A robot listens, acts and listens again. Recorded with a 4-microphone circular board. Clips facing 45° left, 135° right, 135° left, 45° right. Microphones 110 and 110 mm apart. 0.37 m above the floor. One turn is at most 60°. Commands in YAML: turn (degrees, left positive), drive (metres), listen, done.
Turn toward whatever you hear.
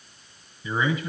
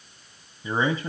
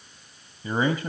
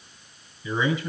turn: 60
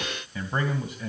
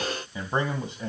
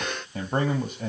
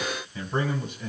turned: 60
turn: 60
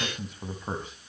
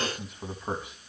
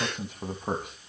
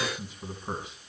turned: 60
turn: 60
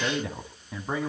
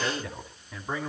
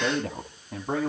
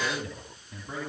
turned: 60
turn: 60
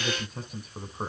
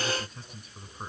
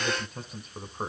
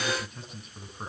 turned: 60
turn: 60
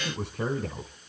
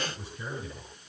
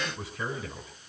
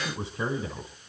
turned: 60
turn: 15
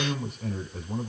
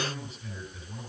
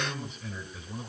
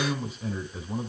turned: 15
done: "Found it: a man speaking, straight ahead."